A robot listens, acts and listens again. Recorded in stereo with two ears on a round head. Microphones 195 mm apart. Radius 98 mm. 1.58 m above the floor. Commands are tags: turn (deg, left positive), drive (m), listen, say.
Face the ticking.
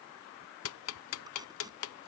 <turn deg="75"/>
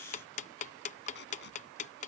<turn deg="35"/>
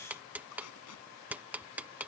<say>Found it: ticking, straight ahead.</say>